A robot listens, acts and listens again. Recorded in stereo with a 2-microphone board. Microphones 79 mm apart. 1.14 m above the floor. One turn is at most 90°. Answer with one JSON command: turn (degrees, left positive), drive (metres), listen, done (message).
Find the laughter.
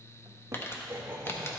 {"turn": -30}
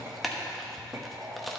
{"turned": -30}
{"turn": -40}
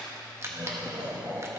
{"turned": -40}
{"turn": -90}
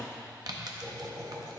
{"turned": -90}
{"turn": -35}
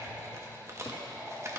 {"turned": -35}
{"turn": -15}
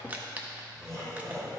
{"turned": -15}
{"done": "Found it: laughter, straight ahead, over 4 m away."}